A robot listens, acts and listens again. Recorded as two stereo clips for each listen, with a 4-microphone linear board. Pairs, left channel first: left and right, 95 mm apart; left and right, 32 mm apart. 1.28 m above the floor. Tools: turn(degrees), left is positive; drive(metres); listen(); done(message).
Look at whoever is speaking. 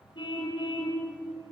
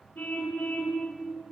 listen()
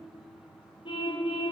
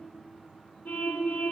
listen()
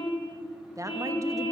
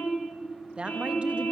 turn(degrees=-35)
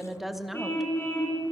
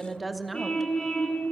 done("Facing the woman speaking, 1 to 2 m away.")